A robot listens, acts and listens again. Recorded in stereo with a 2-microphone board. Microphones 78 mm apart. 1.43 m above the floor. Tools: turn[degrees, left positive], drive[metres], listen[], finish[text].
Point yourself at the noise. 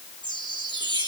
Action: turn[-90]
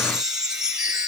Thought: So it is at 10° right.
Action: turn[-10]
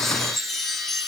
Action: finish[Facing the chime.]